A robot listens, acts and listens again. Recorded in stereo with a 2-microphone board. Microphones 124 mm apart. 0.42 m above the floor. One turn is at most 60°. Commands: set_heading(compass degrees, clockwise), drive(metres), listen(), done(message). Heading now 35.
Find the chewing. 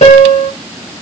listen()
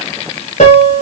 listen()
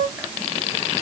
done("I can't make out chewing, only a piano.")